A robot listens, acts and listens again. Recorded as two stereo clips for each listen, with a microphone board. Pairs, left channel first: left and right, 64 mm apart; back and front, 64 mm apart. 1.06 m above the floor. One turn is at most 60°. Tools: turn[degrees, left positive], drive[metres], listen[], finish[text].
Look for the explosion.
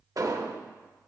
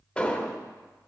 Thought: The explosion: 105° right.
Action: turn[-60]
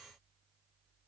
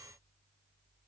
Thought: Nothing new. It was at 45° right.
Action: turn[-45]
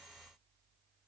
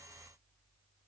Action: finish[Facing where the explosion came from. I can't hear it now.]